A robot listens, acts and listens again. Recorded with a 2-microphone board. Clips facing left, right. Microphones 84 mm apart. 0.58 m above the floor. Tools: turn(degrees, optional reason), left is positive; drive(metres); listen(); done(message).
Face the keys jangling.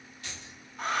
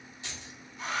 turn(degrees=-20, reason="The keys jangling: about 20° right or 160° right.")
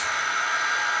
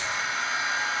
listen()
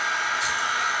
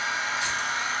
listen()
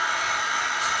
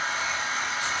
done("I heard keys jangling, but can't make it out now. It was about straight ahead or 140° right.")